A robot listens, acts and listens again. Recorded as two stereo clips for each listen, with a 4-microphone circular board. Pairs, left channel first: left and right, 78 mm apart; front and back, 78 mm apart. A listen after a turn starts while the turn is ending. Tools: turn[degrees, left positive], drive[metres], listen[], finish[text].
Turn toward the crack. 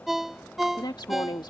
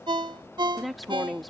Action: listen[]
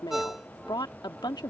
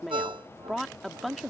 Action: listen[]
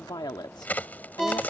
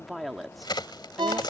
Thought: The crack: 20° left.
Action: turn[20]
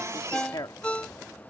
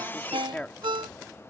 Action: finish[I heard a crack from this way, but can't make it out now.]